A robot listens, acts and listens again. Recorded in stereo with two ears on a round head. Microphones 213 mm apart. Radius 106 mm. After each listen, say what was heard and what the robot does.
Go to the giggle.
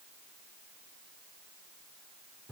Keep listening.
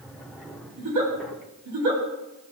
Turn 90° right.
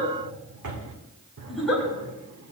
Drive 1.0 m forward.
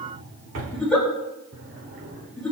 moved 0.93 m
Drive 1.0 m forward.
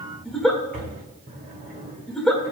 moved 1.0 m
Drive 1.0 m forward.
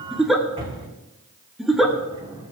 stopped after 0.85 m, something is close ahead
I am next to the giggle.